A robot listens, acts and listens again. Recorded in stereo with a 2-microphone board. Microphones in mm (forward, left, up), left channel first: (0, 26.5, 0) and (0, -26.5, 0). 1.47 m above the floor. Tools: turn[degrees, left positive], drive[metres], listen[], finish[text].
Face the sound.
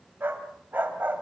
Thought: The dog barking: about 35° right or 145° right.
Action: turn[-35]
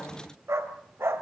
Thought: So it is at 130° right.
Action: turn[-130]
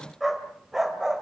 Thought: The dog barking is now 10° right.
Action: turn[-10]
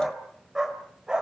Thought: The dog barking is now 15° right.
Action: turn[-15]
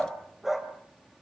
Action: finish[Found it: a dog barking, straight ahead.]